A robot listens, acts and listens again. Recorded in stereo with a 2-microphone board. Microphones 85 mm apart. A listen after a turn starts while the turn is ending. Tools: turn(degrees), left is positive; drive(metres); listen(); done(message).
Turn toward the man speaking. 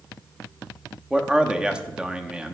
turn(degrees=-30)
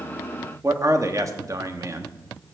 turn(degrees=-140)
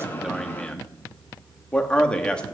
turn(degrees=10)
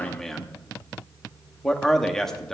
done("Facing the man speaking, 1 to 2 m away.")